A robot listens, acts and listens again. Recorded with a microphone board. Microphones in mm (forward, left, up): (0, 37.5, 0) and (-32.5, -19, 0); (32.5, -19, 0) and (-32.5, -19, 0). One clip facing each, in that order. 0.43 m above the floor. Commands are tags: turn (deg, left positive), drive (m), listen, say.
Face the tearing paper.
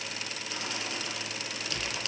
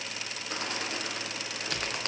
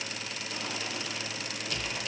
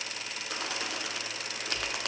<listen/>
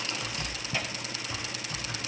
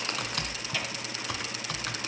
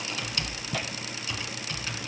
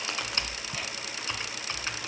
<turn deg="-10"/>
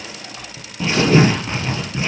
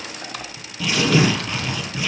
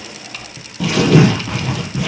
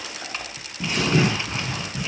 <say>Facing the tearing paper.</say>